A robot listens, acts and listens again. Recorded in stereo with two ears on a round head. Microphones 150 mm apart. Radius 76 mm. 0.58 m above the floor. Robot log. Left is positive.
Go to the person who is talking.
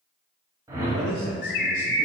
note: The man speaking: about 50° right or 130° right.
cmd yaw -50
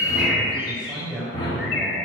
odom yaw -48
cmd fwd 1.0
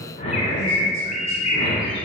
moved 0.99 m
cmd idle
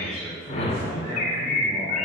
note: The man speaking is now 20° right.
cmd yaw -20
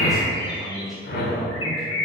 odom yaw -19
cmd fwd 1.0
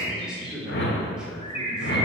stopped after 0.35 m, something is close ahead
end: Arrived at the man speaking, straight ahead.